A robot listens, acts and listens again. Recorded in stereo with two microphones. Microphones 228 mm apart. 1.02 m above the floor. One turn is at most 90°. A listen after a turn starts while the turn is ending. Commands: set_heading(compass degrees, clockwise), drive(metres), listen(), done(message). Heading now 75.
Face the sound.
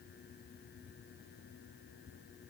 listen()
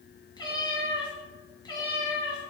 set_heading(55)
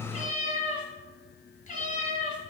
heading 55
set_heading(325)
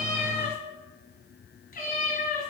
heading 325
set_heading(280)
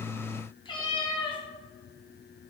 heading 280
set_heading(255)
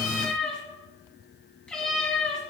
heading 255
done("Facing the cat meowing, 1 to 2 m away.")